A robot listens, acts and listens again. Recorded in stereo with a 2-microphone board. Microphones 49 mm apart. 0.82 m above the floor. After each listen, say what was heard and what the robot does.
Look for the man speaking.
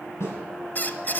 Keep listening.
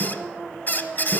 Keep listening.
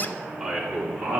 Turn 30° right.
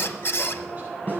Keep listening.
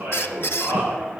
So it is at 150° right. Turn 150° right.
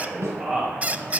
The man speaking is now 15° right. Turn 15° right.
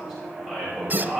Facing the man speaking.